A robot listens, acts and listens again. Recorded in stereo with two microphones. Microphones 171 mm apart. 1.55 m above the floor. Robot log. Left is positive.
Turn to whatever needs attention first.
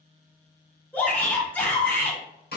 cmd yaw +30
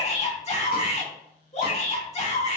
note: So it is at 140° left.
cmd yaw +140
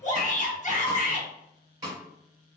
note: The shout is now 50° left.
cmd yaw +50
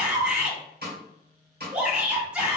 end: Facing the shout, 1 to 2 m away.